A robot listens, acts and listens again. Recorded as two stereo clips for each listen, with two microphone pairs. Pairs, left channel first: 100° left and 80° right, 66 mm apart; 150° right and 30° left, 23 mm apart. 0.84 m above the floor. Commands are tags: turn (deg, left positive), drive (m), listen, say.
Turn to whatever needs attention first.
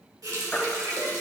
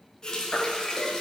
<turn deg="170"/>
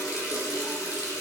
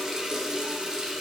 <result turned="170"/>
<listen/>
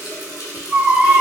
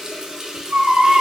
<say>Found it: a baby crying, straight ahead.</say>